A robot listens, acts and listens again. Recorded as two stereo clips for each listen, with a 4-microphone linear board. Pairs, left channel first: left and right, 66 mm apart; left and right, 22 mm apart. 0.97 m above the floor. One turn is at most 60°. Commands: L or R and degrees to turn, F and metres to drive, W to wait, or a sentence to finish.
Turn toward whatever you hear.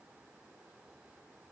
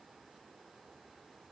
W
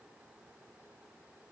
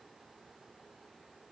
W
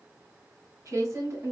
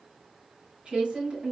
R50
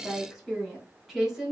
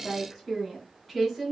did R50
Facing the woman speaking.